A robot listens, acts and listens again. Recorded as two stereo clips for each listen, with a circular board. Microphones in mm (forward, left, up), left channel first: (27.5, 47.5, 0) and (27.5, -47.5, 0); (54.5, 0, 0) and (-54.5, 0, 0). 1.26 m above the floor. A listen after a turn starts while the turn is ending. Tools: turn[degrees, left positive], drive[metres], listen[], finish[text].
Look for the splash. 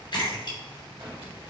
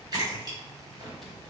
Thought: The splash: 130° left.
Action: turn[130]
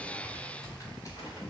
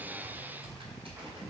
Action: finish[Facing where the splash came from. I can't hear it now.]